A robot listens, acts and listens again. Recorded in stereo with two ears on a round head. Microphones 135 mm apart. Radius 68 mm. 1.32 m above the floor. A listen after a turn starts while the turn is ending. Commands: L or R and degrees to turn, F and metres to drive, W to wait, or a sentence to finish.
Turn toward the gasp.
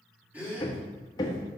R30
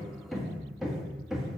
W
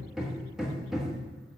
I heard a gasp, but can't make it out now. It was about 20° left or 140° right.